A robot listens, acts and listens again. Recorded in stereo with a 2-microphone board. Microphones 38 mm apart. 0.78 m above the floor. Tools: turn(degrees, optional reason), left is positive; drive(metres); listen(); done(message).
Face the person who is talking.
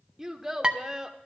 turn(degrees=-30)
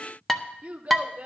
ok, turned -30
turn(degrees=-140, reason="So it is at 140° right.")
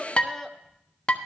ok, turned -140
done("Facing the child speaking, 1 to 2 m away.")